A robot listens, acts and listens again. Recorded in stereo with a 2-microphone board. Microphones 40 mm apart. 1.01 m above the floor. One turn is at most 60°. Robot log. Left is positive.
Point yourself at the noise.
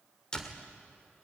note: The door slam: about 15° left or 165° left.
cmd yaw +15
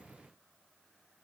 cmd idle
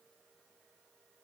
end: I heard a door slam, but can't make it out now. It was about straight ahead or 150° left.